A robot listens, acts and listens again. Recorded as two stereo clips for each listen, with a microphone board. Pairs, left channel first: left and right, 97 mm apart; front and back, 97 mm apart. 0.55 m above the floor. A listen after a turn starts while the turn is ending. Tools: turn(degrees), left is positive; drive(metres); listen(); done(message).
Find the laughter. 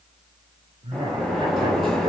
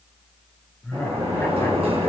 turn(degrees=-70)
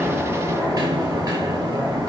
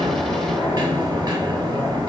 listen()
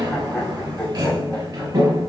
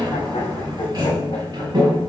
listen()
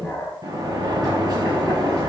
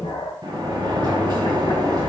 turn(degrees=10)
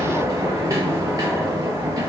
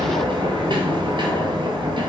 listen()
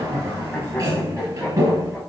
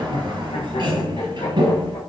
listen()
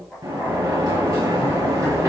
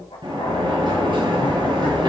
done("I heard laughter from this way, but can't make it out now.")